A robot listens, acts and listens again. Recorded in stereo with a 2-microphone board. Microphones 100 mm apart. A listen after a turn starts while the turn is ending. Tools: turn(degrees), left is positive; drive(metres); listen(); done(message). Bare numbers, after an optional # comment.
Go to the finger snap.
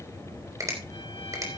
# The finger snap: about 35° right or 145° right.
turn(-35)
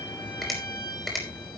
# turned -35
drive(1.0)
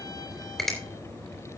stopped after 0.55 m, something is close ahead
done("Blocked. The finger snap is further on, straight ahead.")